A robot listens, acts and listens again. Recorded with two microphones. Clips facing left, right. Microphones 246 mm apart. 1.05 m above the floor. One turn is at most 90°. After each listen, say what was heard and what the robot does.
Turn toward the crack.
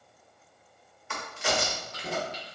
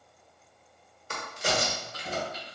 The crack: about 40° right or 140° right. Turn 40° right.
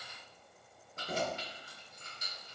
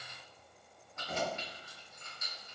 Keep listening.
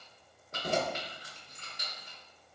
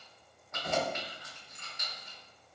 I heard a crack, but can't make it out now. It was about straight ahead or 100° right.